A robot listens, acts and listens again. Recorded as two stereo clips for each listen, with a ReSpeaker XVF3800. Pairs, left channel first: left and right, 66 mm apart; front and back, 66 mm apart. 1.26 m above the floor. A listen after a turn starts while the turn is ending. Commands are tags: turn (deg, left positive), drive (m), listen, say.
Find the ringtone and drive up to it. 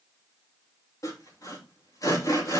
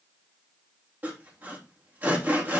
<listen/>
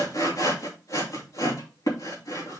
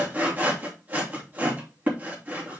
<listen/>
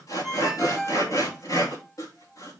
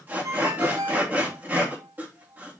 <turn deg="180"/>
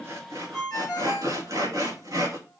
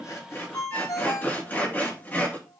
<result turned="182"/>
<drive m="1.0"/>
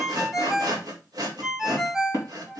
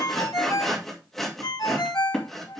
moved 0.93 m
<drive m="1.0"/>
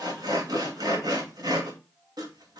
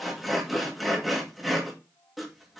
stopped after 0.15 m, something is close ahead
<listen/>
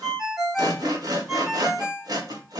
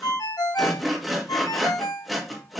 <turn deg="-10"/>
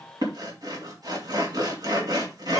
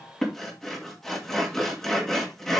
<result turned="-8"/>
<listen/>
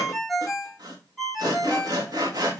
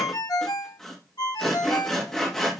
<say>I am next to the ringtone.</say>